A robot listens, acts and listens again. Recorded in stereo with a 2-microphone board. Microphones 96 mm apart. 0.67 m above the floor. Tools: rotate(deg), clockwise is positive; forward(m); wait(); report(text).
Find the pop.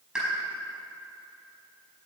rotate(30)
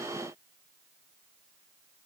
wait()
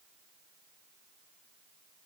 report("I heard a pop, but can't make it out now. It was about 20° left or 140° right.")